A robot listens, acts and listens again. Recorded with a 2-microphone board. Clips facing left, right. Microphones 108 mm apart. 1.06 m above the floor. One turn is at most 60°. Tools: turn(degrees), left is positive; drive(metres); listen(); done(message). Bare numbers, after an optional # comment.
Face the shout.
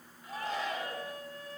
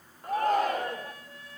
# The shout: about 50° right or 130° right.
turn(-50)
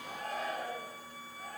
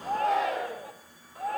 # So it is at 80° right.
turn(-60)
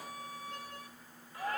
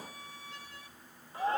# The shout is now 25° right.
turn(-25)
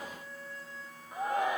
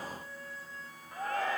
# The shout is now 15° left.
turn(15)
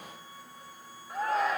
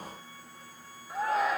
done("Found it: a shout, straight ahead.")